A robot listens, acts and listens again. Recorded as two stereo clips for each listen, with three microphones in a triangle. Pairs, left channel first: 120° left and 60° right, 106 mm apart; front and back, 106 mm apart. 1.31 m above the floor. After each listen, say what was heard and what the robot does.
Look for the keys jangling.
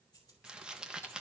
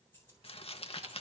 The keys jangling: 70° left. Turn 70° left.
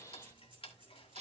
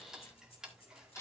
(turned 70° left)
The keys jangling is now 20° right. Turn 20° right.
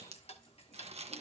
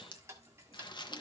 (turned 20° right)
Keep listening.
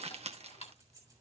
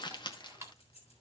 Found it: keys jangling, straight ahead.